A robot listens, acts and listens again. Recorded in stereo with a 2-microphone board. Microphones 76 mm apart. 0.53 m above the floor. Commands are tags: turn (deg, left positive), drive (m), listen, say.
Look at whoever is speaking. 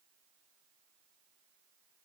<listen/>
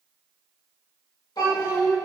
<turn deg="70"/>
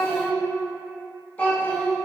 <turn deg="25"/>
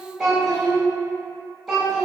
<say>Found it: a child speaking, straight ahead.</say>